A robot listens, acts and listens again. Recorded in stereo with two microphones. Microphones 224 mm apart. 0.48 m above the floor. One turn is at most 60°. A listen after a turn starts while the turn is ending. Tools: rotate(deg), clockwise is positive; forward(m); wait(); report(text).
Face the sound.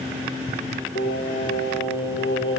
rotate(-60)
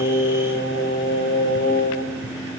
rotate(-50)
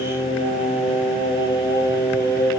rotate(-15)
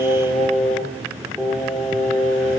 report("Facing the singing.")